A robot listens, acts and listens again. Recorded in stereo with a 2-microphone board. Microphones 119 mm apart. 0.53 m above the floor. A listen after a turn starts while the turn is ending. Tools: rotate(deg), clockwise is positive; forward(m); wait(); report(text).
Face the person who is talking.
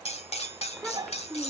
rotate(-30)
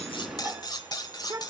rotate(25)
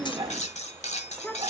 rotate(-10)
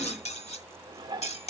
wait()
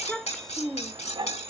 report("Facing the child speaking.")